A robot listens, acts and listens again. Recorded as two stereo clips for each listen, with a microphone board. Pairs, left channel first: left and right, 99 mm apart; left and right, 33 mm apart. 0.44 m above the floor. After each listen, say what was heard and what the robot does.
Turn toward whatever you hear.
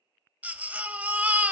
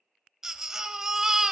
The baby crying: about 15° right or 165° right. Turn 15° right.
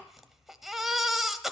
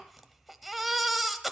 Found it: a baby crying, straight ahead.